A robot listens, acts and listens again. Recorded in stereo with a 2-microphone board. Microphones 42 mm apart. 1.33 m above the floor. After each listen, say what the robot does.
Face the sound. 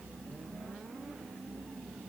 Keep listening.
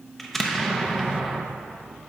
Turn 30° left.
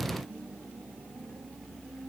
Keep listening.
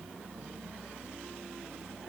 I heard an explosion, but can't make it out now. It was about 25° right or 145° left.